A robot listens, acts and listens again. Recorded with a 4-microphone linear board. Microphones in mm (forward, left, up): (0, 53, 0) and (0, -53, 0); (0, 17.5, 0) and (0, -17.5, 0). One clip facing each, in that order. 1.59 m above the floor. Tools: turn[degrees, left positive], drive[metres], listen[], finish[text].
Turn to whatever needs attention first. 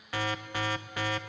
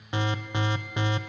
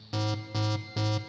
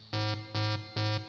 Thought: The alarm: about 20° right or 160° right.
Action: turn[-20]
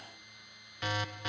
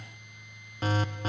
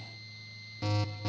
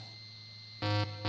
Thought: So it is at 140° right.
Action: turn[-140]
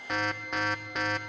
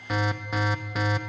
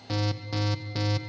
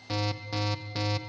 Action: finish[Facing the alarm, 1 to 2 m away.]